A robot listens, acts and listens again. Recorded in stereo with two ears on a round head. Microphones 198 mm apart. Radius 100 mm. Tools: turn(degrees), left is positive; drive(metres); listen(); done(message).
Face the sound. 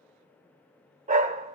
turn(degrees=-35)
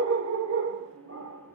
turn(degrees=-110)
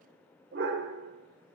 turn(degrees=-50)
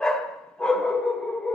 done("Found it: a dog barking, straight ahead.")